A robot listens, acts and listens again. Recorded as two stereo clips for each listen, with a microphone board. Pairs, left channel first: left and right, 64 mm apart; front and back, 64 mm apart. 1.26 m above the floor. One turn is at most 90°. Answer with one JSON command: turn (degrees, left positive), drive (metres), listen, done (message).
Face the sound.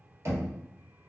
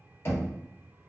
{"turn": -50}
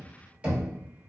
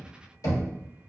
{"turn": -20}
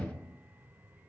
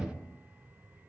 {"listen": true}
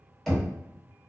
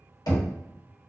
{"done": "Found it: knocking, straight ahead, 1 to 2 m away."}